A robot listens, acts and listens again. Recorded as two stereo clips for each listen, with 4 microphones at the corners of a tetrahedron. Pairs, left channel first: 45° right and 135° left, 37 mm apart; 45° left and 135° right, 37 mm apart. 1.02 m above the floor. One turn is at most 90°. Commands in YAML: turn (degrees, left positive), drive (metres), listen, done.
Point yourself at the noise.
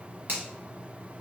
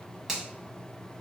turn: 90
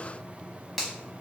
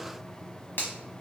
turn: 50
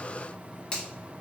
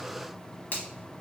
turn: 25
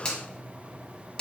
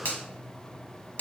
turn: 25
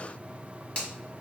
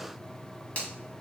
turn: 10
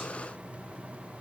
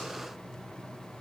listen: true
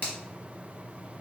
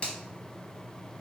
done: "Found it: a finger snap, straight ahead, under 1 m away."